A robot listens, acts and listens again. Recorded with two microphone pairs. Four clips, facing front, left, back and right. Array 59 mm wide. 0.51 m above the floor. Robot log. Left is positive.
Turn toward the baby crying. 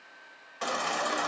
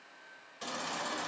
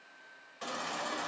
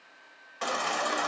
note: The baby crying: 50° right.
cmd yaw -50
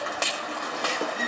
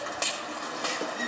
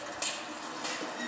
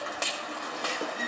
end: Found it: a baby crying, straight ahead.